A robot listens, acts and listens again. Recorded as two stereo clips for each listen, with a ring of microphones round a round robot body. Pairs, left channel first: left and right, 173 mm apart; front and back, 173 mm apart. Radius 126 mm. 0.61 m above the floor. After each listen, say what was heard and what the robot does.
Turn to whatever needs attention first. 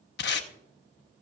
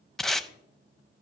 Keep listening.
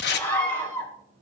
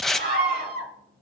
The scream: 165° left. Turn 165° left.
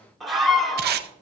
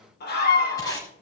Found it: a scream, straight ahead, 2 to 4 m away.